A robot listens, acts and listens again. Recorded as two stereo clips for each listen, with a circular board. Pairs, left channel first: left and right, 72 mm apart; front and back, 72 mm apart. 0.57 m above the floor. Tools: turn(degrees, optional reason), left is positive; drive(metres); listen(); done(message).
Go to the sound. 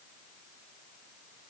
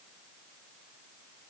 listen()
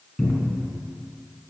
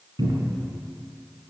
turn(degrees=-175, reason="The cupboard door: 175° right.")
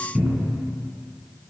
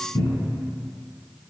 drive(metres=1.0)
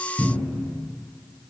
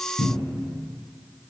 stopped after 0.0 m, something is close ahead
done("Something is in my way. I am facing the cupboard door but have not reached it.")